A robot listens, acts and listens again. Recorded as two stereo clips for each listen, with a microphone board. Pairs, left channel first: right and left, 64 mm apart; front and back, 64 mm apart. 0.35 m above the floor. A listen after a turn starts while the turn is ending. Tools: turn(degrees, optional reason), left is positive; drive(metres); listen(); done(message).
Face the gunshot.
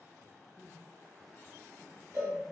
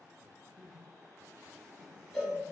listen()
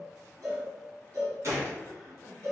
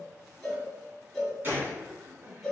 turn(degrees=125, reason="The gunshot: 125° left.")
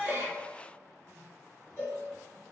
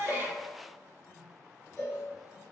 done("I heard a gunshot from this way, but can't make it out now.")